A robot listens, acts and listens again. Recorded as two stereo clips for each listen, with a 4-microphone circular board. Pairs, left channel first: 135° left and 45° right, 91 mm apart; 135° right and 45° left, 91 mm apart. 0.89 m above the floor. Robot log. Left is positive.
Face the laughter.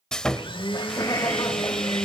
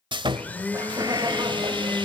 note: The laughter: 85° left.
cmd yaw +85
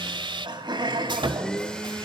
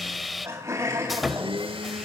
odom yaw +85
note: The laughter is now 15° right.
cmd yaw -15
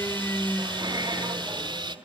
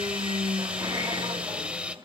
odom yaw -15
cmd idle
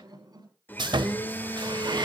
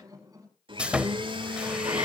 end: Facing the laughter.